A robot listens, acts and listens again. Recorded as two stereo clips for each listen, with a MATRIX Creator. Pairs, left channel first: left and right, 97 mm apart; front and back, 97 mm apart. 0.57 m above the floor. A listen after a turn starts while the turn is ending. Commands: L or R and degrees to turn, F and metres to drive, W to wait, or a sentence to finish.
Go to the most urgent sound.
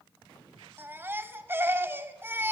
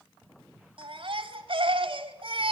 R155
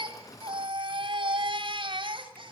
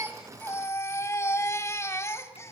R60
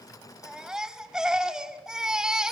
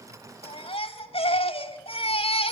F1.0
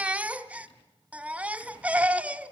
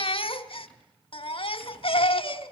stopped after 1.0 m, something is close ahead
R15
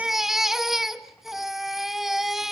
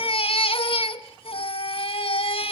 Arrived at the baby crying, straight ahead.